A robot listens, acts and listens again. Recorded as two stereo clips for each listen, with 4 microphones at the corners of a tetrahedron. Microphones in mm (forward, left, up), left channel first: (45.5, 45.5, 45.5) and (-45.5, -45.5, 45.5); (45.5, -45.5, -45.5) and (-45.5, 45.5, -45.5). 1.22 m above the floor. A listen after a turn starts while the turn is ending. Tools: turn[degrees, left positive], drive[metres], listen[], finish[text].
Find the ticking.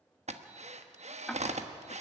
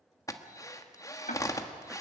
Thought: The ticking: 40° right.
Action: turn[-40]
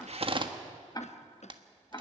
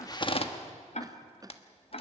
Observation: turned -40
Thought: The ticking is now 15° right.
Action: turn[-15]
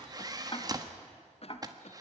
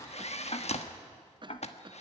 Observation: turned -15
Action: finish[Found it: ticking, straight ahead, 1 to 2 m away.]